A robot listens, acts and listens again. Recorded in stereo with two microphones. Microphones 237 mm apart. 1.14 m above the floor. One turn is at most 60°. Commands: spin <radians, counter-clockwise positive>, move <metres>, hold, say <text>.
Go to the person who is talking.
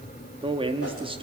spin -0.35
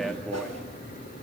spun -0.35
hold
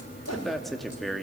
move 1.0
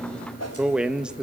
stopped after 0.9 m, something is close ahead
say Arrived at the man speaking, straight ahead.